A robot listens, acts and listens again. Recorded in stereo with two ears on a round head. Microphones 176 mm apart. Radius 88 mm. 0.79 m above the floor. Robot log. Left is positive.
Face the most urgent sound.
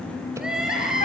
cmd yaw -30
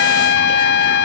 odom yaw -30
cmd idle
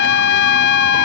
cmd idle
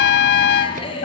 note: So it is at 25° left.
cmd yaw +25
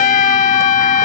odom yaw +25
cmd idle
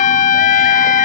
cmd idle
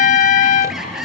end: Found it: crying, straight ahead.